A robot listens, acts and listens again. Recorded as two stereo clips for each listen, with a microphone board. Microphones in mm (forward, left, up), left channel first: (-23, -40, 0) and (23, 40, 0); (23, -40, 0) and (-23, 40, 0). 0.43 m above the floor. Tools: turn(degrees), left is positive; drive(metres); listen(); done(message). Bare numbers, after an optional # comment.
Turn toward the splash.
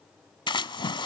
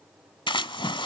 # The splash: 90° right.
turn(-90)
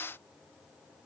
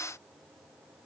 done("I heard a splash from this way, but can't make it out now.")